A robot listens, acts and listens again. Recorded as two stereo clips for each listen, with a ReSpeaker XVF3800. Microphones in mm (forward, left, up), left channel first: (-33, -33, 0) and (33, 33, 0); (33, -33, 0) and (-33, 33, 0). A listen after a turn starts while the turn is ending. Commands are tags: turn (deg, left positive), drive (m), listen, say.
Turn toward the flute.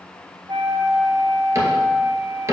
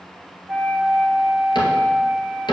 <turn deg="60"/>
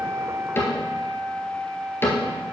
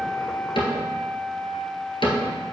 <say>Facing the flute, 1 to 2 m away.</say>